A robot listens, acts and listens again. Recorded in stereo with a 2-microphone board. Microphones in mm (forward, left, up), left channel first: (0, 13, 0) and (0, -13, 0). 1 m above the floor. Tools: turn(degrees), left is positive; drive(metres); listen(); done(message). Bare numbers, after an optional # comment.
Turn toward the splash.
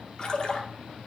# The splash: about 30° left or 150° left.
turn(30)
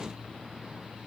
listen()
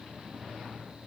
done("I heard a splash, but can't make it out now. It was about straight ahead or 120° left.")